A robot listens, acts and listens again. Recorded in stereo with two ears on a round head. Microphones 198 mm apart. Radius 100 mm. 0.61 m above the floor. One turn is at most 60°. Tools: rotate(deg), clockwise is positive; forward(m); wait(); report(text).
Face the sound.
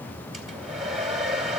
rotate(-30)
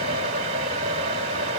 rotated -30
rotate(30)
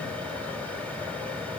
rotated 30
wait()
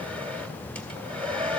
report("Facing the hair dryer.")